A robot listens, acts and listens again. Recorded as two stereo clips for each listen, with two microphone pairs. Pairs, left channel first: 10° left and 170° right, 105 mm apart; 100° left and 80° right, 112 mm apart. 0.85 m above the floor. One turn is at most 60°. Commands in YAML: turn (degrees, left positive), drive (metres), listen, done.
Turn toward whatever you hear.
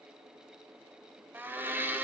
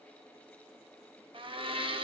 turn: -60
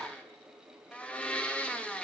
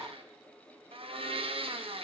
turn: -60
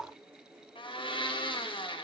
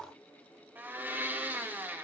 turn: -10
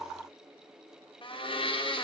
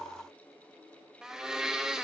done: "Found it: a blender, straight ahead, under 1 m away."